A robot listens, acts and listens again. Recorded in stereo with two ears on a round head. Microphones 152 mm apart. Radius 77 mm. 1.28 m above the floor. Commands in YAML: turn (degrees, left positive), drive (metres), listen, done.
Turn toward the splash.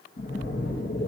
turn: 60
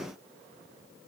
listen: true
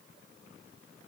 done: "I heard a splash, but can't make it out now. It was about straight ahead or 60° left."